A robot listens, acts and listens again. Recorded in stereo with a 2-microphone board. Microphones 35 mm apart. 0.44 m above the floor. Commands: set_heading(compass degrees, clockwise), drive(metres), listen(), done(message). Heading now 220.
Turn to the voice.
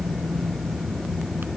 listen()
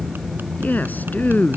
set_heading(165)
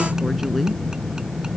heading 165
listen()
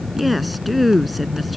done("Facing the woman speaking.")